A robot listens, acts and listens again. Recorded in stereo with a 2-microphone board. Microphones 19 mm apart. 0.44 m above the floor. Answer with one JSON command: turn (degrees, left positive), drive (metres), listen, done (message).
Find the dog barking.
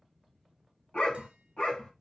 {"turn": 90}
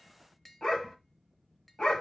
{"turn": 40}
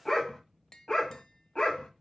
{"turn": 45}
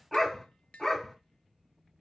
{"done": "Facing the dog barking."}